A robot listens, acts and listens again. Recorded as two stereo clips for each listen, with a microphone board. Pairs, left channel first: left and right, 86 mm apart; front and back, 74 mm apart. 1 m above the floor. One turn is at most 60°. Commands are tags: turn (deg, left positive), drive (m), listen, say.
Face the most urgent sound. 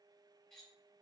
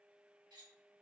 <listen/>
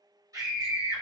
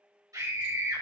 <turn deg="-60"/>
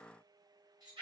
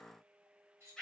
<turn deg="-60"/>
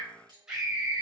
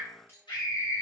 <turn deg="-10"/>
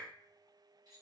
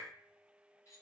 <listen/>
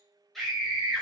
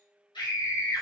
<say>Facing the scream.</say>